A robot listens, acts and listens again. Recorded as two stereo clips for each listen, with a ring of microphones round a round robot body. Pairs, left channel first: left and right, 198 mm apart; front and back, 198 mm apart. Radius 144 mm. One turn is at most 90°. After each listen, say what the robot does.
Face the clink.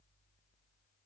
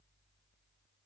Keep listening.
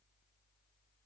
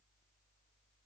Keep listening.
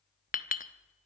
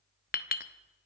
Turn 40° left.
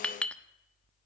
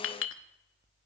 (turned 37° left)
Facing the clink, 1 to 2 m away.